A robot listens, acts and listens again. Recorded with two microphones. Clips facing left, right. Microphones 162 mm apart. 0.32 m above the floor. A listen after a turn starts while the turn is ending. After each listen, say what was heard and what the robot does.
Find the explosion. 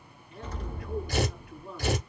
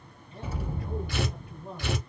Turn 30° right.
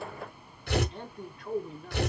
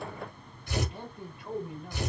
Keep listening.
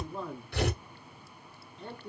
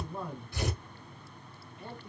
I heard an explosion, but can't make it out now. It was about 20° left or 140° right.